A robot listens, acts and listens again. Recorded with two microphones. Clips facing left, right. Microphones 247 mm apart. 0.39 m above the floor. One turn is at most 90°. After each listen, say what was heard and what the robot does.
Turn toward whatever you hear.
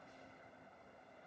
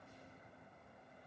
Keep listening.
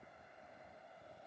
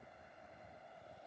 Keep listening.
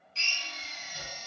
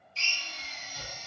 Turn 90° left.
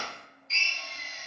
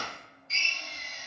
Facing the drill, 1 to 2 m away.